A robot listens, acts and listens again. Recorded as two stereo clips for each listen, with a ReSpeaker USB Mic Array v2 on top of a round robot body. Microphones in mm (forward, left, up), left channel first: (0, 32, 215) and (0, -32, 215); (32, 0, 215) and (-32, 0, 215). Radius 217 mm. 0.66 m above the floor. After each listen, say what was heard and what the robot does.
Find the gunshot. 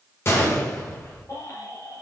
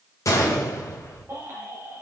The gunshot: 40° left. Turn 40° left.
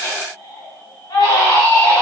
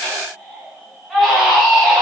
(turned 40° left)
I heard a gunshot from this way, but can't make it out now.